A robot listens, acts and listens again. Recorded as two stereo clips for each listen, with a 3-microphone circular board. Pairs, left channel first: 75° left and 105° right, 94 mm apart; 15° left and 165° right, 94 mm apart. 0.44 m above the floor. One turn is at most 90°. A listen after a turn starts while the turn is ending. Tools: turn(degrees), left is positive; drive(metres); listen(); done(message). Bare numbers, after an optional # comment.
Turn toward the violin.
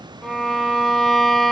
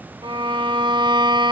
# The violin: 165° left.
turn(90)
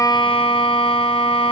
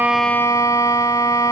# The violin is now 70° left.
turn(70)
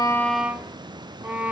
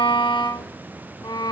# The violin is now 30° right.
turn(-30)
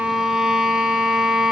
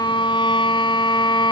# The violin is now 20° right.
turn(-20)
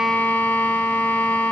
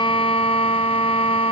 done("Found it: a violin, straight ahead, 1 to 2 m away.")